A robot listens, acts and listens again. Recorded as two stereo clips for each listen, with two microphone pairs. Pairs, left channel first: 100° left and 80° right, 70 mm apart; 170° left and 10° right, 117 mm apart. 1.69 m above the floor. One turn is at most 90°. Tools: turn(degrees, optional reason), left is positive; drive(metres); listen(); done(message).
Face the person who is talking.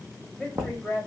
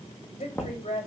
turn(degrees=-90, reason="The woman speaking: 165° right.")
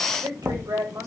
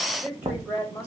turn(degrees=-85, reason="The woman speaking is now 85° right.")
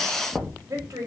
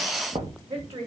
turn(degrees=-30, reason="The woman speaking is now 30° right.")
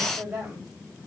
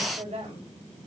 done("Found it: a woman speaking, straight ahead, 2 to 4 m away.")